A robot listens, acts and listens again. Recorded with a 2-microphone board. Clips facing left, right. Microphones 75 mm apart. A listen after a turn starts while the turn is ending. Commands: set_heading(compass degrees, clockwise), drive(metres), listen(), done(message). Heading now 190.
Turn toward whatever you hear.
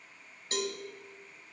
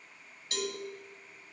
set_heading(160)
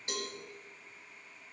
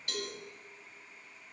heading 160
listen()
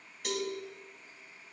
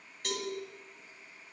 done("Found it: a cowbell, straight ahead, 1 to 2 m away.")